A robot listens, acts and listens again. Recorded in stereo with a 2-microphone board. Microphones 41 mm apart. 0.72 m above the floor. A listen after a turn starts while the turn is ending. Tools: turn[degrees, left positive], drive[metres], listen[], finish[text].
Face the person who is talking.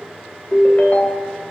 Action: listen[]
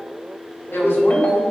Action: turn[90]
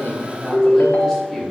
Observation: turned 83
Thought: So it is at 10° left.
Action: turn[10]
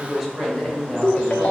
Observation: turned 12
Action: finish[Found it: a woman speaking, straight ahead, 2 to 4 m away.]